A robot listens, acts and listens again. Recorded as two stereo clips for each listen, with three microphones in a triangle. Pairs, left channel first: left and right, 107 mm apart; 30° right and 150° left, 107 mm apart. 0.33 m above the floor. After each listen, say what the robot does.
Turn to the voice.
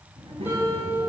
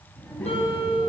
Turn 105° right.
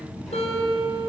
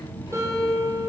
Facing the child speaking.